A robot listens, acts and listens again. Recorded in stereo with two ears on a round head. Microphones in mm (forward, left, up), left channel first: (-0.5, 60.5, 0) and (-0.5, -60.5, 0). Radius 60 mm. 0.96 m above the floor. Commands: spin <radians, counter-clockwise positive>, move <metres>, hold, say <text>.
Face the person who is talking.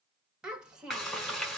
spin -0.52
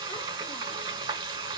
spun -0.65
hold
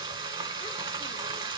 hold
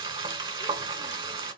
say I heard a child speaking, but can't make it out now. It was about 30° left or 135° right.